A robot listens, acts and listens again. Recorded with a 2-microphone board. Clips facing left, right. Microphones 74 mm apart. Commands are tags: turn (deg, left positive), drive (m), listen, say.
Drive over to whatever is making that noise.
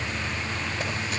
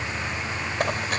<turn deg="-60"/>
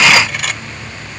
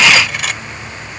<drive m="1.0"/>
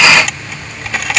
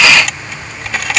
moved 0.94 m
<drive m="1.0"/>
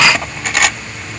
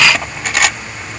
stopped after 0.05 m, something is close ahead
<say>Arrived at the cutlery clinking, straight ahead.</say>